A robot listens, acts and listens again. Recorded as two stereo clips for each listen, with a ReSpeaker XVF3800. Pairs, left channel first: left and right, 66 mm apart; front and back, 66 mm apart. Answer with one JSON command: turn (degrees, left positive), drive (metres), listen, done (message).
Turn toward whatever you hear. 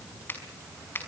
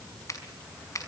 {"turn": 35}
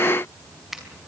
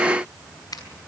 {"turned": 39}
{"done": "Found it: a finger snap, straight ahead."}